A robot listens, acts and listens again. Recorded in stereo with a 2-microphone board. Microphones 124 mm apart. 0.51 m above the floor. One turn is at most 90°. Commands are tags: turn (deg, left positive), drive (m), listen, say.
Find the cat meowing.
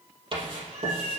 <turn deg="-90"/>
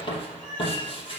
<turn deg="10"/>
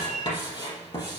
<say>Facing the cat meowing.</say>